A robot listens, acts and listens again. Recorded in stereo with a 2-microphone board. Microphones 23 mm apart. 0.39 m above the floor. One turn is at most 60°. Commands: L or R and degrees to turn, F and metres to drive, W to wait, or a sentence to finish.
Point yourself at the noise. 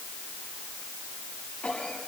L60
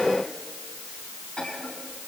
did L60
L50
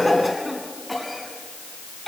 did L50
Found it: a cough, straight ahead, over 4 m away.